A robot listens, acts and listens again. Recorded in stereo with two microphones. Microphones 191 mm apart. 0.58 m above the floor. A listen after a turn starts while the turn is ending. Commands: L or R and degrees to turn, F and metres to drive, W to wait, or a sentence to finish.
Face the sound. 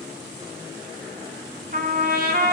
R55
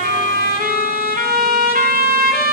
R60
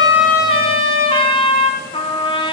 L30
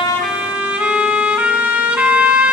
R10
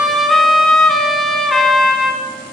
Found it: a trumpet, straight ahead.